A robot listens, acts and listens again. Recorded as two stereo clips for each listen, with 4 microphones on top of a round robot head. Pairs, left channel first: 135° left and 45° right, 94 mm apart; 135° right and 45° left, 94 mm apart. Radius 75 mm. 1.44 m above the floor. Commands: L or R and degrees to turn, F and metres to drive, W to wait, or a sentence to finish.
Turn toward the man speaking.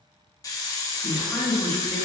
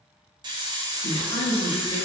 R140
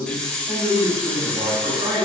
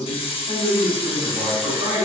R10
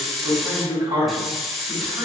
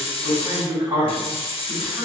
Facing the man speaking.